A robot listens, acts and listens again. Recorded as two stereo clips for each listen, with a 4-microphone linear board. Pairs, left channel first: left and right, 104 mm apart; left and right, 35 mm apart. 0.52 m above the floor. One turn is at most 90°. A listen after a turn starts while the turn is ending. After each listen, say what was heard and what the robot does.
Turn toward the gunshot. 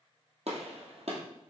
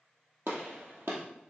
The gunshot: about 75° right or 105° right. Turn 75° right.
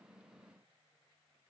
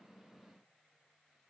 Keep listening.
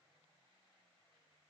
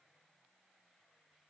I heard a gunshot, but can't make it out now. It was about straight ahead or 30° right.